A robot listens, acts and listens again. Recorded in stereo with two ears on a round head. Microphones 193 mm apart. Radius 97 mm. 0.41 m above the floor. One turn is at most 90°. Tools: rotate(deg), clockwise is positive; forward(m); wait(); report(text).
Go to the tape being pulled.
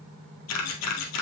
wait()
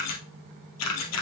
wait()
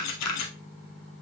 report("I can't make out tape being pulled to turn to.")